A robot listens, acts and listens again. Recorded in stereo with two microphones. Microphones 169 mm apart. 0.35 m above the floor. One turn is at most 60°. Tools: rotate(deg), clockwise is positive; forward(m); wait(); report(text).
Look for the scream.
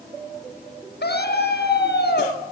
rotate(-60)
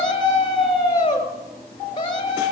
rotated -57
rotate(-30)
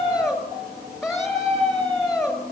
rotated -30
report("Found it: a scream, straight ahead.")